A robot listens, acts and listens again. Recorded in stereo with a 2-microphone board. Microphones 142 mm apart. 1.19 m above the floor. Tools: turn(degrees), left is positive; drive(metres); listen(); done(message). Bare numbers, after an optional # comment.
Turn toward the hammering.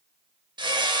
# The hammering: about 35° right or 145° right.
turn(-35)
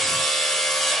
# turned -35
done("Facing the hammering, 1 to 2 m away.")